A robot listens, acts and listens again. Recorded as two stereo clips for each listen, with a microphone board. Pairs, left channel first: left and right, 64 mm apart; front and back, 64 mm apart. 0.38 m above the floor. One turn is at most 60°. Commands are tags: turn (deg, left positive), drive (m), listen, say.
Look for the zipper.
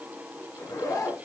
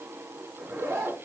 <turn deg="60"/>
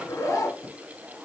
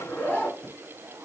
<turn deg="60"/>
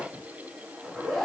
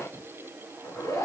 <say>Facing the zipper.</say>